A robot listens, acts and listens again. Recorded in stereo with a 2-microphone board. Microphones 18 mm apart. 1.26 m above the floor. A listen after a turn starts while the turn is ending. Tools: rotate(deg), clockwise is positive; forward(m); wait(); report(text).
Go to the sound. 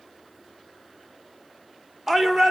rotate(30)
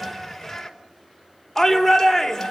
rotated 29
rotate(-15)
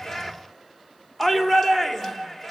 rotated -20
forward(1.0)
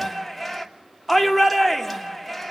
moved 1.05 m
forward(1.0)
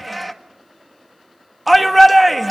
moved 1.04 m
forward(1.0)
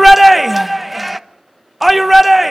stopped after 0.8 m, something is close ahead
report("I am next to the shout.")